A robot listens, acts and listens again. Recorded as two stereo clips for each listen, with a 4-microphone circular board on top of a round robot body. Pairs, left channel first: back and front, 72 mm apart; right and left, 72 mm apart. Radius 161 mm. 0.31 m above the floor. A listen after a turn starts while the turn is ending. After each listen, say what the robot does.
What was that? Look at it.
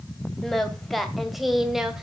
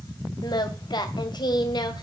Turn 85° right.
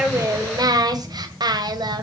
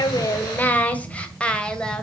Turn 10° right.
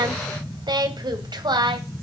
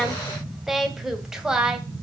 Turn 10° left.
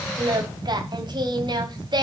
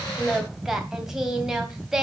Facing the singing, 2 to 4 m away.